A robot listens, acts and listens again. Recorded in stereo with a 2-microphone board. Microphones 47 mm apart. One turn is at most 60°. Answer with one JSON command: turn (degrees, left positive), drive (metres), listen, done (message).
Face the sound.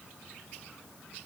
{"listen": true}
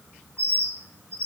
{"turn": -60}
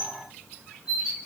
{"turn": -10}
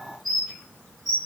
{"done": "Found it: a bird, straight ahead."}